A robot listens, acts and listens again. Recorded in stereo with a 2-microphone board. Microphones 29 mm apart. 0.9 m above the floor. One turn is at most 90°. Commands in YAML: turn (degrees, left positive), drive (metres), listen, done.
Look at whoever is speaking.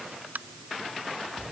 listen: true
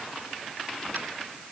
listen: true
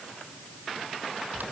done: "I can't make out anyone speaking to turn to."